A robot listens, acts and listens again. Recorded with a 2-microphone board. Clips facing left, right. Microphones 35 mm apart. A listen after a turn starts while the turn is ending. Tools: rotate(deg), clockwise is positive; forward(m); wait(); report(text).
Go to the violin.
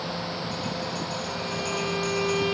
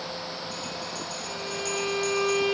rotate(30)
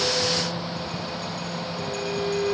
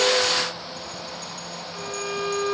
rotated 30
rotate(135)
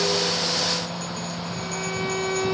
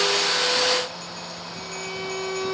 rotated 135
rotate(-15)
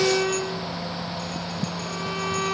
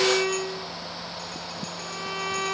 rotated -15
forward(1.0)
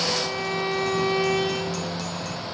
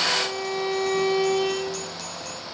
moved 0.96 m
forward(1.0)
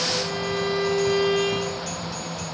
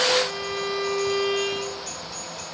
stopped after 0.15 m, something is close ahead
rotate(-10)
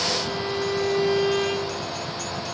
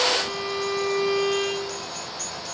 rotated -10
report("Something is in my way. I am facing the violin but have not reached it.")